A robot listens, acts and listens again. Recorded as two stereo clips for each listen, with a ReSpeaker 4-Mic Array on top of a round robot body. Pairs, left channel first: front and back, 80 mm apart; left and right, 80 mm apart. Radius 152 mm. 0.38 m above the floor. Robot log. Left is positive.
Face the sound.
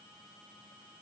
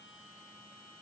cmd idle
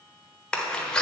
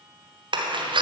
note: The door slam: 80° right.
cmd yaw -80
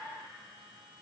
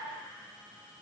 end: I heard a door slam from this way, but can't make it out now.